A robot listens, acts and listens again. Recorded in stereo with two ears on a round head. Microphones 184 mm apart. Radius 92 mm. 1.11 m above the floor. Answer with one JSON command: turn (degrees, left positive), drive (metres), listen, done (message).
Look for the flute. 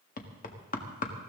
{"listen": true}
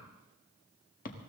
{"listen": true}
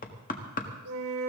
{"turn": -90}
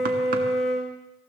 {"done": "Found it: a flute, straight ahead, 2 to 4 m away."}